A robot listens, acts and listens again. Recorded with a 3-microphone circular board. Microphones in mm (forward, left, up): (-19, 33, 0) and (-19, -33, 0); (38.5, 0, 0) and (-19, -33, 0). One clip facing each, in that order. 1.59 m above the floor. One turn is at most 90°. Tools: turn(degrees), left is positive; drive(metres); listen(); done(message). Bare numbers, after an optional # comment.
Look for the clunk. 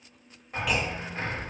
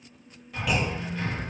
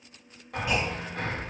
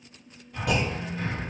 # The clunk: straight behind.
turn(90)
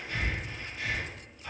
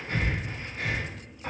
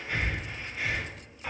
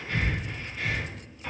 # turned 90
# Nothing new. It was at 90° left.
turn(90)
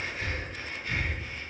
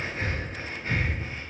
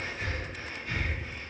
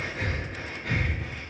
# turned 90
done("Facing where the clunk came from. I can't hear it now.")